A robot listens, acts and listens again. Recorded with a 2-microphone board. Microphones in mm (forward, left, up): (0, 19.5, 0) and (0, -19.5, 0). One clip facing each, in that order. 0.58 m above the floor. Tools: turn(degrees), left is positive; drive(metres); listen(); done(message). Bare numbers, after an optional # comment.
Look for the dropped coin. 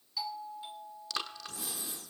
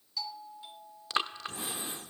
listen()
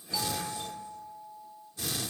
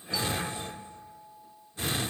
listen()
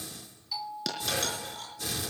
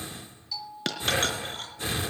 # The dropped coin: about 50° right or 130° right.
turn(-50)
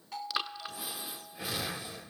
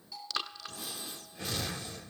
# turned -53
listen()
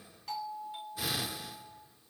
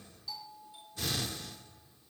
done("I heard a dropped coin, but can't make it out now. It was about 5° left or 80° right.")